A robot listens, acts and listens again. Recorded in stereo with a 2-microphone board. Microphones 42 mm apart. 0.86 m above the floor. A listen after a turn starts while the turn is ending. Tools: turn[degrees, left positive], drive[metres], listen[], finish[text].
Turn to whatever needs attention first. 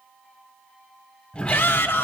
Thought: The shout: about 60° left or 120° left.
Action: turn[60]
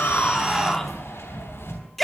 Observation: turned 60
Action: finish[Found it: a shout, straight ahead.]